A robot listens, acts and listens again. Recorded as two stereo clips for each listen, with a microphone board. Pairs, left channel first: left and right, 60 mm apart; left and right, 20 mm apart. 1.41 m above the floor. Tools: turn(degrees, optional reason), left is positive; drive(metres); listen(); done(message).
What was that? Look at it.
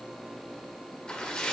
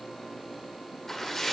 turn(degrees=15, reason="The splash: about 15° left or 165° left.")
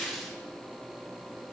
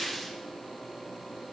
done("Facing the splash.")